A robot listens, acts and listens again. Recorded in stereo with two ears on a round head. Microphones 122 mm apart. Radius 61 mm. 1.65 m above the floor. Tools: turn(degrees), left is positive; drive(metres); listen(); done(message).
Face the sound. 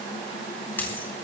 turn(degrees=30)
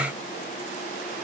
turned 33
listen()
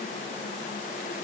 done("I heard a dropped coin, but can't make it out now. It was about 20° right or 135° left.")